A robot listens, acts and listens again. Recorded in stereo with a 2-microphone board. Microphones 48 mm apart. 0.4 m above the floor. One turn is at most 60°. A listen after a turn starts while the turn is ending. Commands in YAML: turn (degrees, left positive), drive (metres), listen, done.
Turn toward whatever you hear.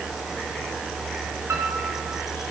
turn: -60
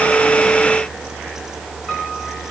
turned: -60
done: "Found it: a piano, straight ahead, over 4 m away."